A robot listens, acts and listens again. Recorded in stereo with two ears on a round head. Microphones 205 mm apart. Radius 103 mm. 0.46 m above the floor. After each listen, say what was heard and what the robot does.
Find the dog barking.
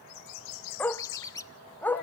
Turn 30° left.
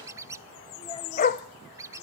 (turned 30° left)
So it is at 145° left. Turn 145° left.
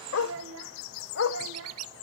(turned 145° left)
The dog barking is now 55° left. Turn 55° left.
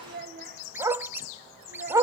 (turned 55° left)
The dog barking is now 15° right. Turn 15° right.
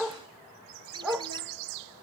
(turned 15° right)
Found it: a dog barking, straight ahead, under 1 m away.